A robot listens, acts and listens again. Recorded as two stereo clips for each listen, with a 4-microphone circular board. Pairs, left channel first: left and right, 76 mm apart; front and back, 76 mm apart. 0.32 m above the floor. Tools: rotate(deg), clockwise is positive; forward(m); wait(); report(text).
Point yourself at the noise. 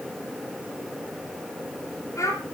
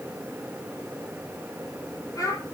rotate(-40)
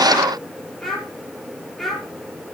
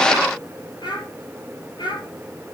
report("Facing the child speaking.")